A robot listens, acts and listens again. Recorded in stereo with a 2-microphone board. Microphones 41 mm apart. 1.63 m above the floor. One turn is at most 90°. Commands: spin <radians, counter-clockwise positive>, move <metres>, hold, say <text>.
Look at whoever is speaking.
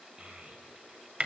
spin -0.35
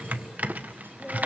hold
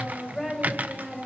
say Found it: a child speaking, straight ahead.